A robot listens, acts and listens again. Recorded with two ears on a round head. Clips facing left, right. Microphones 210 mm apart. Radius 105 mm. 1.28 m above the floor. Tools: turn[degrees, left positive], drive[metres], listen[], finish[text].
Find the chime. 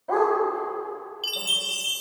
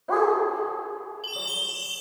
Thought: The chime: about 70° left or 110° left.
Action: turn[70]
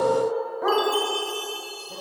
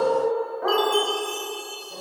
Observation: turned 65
Action: finish[Facing the chime, 1 to 2 m away.]